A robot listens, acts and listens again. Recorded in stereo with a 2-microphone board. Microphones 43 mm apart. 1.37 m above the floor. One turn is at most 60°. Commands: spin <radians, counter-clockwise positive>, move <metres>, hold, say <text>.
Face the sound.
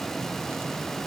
hold
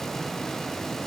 hold
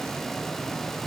say I can't make out anything to turn to.